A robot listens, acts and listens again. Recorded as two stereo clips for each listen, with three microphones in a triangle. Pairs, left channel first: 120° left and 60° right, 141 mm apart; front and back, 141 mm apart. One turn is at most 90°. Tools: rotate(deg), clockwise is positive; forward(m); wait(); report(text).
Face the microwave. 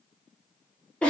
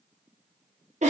wait()
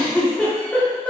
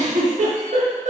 wait()
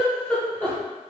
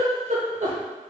report("I can't make out a microwave to turn to.")